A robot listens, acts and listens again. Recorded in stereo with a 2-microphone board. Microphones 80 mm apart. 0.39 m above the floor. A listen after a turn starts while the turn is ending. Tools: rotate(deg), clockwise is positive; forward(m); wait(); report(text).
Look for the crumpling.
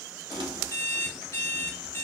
rotate(75)
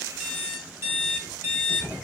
rotate(15)
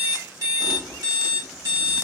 report("Facing the crumpling, under 1 m away.")